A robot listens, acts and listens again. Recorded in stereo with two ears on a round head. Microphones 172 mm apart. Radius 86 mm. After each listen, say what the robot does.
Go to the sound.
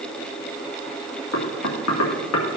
Turn 90° left.
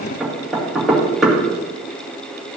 Drive 1.0 m forward.
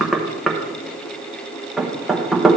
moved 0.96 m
Drive 1.0 m forward.
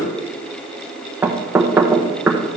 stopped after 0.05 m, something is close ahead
Turn 10° right.
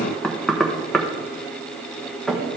Arrived at the knocking, straight ahead.